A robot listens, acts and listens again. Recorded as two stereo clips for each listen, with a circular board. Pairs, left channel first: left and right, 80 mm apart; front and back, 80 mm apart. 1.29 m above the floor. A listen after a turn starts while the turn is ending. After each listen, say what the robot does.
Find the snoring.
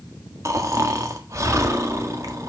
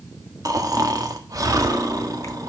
Turn 140° right.
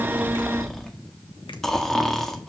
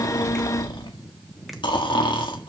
Facing the snoring, 1 to 2 m away.